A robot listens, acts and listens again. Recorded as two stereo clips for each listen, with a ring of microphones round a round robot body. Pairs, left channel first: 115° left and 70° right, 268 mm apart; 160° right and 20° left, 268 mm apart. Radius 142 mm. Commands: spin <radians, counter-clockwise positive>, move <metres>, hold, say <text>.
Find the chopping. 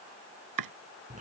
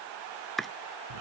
spin -1.22
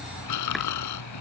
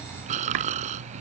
hold
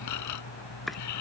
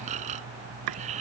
spin 0.44
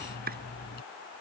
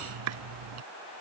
spin -0.17
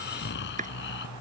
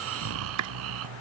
say Facing the chopping.